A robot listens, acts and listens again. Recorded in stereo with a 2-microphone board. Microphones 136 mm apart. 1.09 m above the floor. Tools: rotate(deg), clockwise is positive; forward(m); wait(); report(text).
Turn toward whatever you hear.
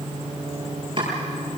rotate(40)
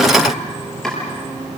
report("Found it: chopping, straight ahead, over 4 m away.")